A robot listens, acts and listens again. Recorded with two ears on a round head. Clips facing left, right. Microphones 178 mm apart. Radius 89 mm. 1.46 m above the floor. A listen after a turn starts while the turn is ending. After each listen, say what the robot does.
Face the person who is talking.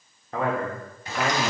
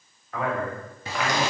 Turn 35° left.
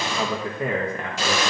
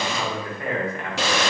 Turn 95° left.
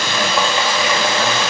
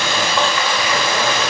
Keep listening.
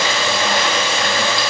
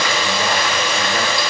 Keep listening.
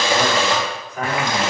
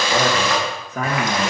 Turn 45° right.
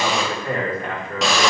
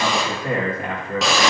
Turn 20° right.
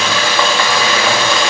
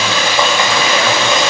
Keep listening.
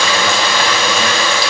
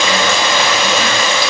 Keep listening.
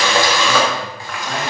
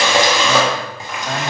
I heard a man speaking from this way, but can't make it out now.